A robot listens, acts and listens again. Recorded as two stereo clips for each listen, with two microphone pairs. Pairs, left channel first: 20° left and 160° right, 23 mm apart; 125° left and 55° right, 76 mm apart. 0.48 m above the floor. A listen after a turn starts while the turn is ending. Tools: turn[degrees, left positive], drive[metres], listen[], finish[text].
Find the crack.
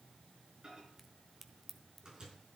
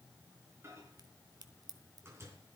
Thought: The crack: 80° right.
Action: turn[-80]
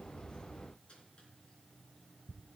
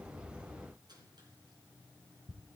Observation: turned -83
Action: finish[I heard a crack from this way, but can't make it out now.]